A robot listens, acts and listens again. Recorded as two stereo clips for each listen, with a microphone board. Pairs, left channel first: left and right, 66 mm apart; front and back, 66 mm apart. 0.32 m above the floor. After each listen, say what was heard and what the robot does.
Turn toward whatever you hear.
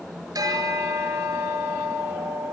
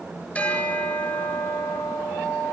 The bell: 65° right. Turn 65° right.
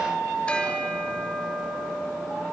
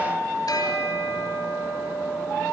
The bell is now 20° left. Turn 20° left.
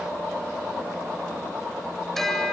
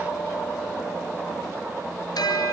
Facing the bell.